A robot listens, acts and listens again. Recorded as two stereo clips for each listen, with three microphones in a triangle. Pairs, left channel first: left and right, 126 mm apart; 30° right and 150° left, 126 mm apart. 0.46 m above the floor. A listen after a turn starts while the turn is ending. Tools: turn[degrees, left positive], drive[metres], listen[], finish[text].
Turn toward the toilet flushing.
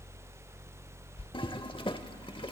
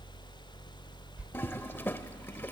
Thought: The toilet flushing: 45° left.
Action: turn[45]
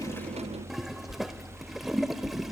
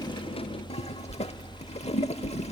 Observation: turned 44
Action: finish[Facing the toilet flushing, under 1 m away.]